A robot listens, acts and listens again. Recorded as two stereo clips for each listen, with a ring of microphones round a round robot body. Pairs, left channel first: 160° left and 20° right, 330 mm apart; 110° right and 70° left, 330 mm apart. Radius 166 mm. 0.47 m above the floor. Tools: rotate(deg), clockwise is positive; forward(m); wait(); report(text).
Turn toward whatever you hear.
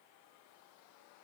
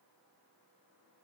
wait()
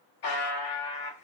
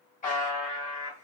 rotate(-180)
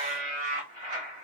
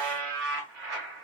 rotate(-55)
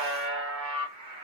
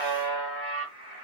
rotate(-20)
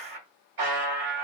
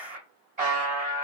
report("Facing the buzzer, 1 to 2 m away.")